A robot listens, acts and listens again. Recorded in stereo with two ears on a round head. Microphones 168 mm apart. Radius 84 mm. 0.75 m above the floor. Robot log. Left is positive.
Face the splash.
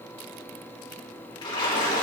note: The splash: about 25° left or 155° left.
cmd yaw +25
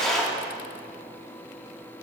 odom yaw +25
end: Facing the splash, 2 to 4 m away.